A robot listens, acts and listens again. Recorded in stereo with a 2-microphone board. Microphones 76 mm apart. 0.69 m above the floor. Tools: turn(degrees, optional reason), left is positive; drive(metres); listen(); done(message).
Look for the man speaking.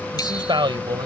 turn(degrees=-90)
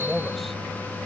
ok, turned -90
done("Found it: a man speaking, straight ahead.")